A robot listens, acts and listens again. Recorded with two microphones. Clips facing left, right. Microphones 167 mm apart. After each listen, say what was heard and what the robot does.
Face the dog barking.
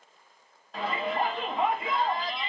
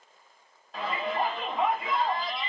Keep listening.
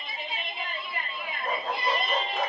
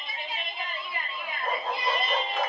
The dog barking: about 75° right or 105° right. Turn 75° right.
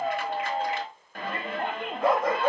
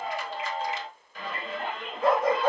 So it is at 35° right. Turn 35° right.
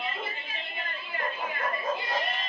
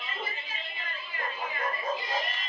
The dog barking is now 10° right. Turn 10° right.
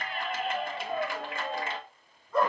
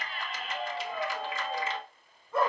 Facing the dog barking, over 4 m away.